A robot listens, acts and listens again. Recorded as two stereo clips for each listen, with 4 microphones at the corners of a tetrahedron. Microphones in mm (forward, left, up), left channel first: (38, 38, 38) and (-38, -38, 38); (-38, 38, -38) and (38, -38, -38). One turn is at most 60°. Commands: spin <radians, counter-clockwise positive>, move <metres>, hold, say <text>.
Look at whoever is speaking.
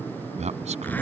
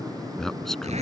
spin -1.05
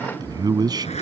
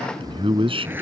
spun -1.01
spin -1.05
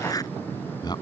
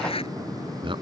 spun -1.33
say Facing the man speaking.